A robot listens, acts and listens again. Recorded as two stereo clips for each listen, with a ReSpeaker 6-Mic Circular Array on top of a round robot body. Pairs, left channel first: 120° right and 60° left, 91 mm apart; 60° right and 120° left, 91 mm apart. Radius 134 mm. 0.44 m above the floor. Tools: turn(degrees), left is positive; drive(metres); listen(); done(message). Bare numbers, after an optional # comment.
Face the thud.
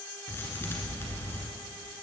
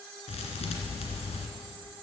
# The thud: 55° right.
turn(-55)
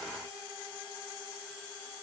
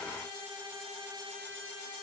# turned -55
done("Facing where the thud came from. I can't hear it now.")